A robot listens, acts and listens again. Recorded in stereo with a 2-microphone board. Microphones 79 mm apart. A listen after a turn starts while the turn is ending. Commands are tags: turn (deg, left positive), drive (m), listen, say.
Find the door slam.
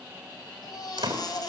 <turn deg="-75"/>
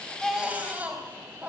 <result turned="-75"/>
<listen/>
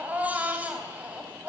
<say>I heard a door slam, but can't make it out now. It was about straight ahead or 30° right.</say>